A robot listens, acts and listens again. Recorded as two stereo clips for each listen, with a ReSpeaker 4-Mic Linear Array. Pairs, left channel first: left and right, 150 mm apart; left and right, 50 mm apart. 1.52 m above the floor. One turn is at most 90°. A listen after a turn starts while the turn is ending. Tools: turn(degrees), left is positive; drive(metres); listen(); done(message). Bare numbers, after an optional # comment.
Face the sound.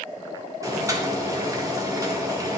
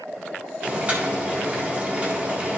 # The boiling: about 20° right or 160° right.
turn(-20)
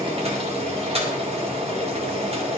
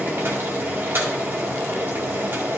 # So it is at 140° right.
turn(-90)
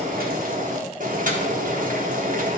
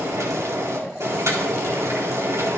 # The boiling is now 65° right.
turn(-65)
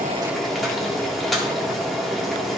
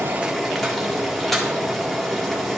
done("Facing the boiling.")